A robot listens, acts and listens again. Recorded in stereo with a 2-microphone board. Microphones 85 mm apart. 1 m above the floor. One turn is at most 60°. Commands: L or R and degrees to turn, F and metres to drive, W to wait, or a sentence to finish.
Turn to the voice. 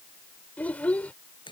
L15
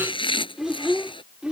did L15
R10
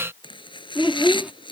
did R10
R10
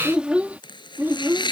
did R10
R30
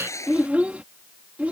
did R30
R15
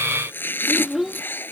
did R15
Found it: a child speaking, straight ahead.